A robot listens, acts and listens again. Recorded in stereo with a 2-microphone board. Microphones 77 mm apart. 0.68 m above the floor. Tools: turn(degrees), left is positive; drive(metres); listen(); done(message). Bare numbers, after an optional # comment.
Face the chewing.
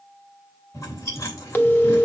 # The chewing: about 40° left or 140° left.
turn(40)
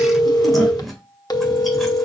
done("Found it: chewing, straight ahead.")